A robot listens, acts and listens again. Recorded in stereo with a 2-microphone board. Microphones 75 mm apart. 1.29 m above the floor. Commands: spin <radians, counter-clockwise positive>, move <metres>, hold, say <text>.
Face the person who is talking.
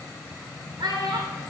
spin -1.22
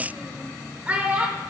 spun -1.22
spin -0.44
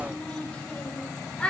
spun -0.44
spin 0.26
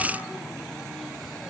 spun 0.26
hold
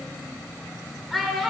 say Facing the child speaking, under 1 m away.